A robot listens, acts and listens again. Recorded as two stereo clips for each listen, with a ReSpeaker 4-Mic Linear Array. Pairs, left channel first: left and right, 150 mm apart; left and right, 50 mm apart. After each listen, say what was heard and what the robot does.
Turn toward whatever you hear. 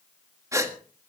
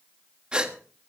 The gasp: about 20° right or 160° right. Turn 20° right.
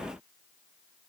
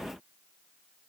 Keep listening.
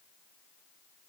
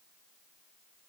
I heard a gasp, but can't make it out now. It was about straight ahead or 140° right.